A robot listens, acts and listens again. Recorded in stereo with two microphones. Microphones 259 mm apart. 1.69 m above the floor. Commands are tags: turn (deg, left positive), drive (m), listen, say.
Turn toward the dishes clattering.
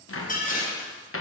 <turn deg="30"/>
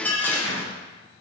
<turn deg="10"/>
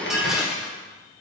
<say>Found it: dishes clattering, straight ahead, 1 to 2 m away.</say>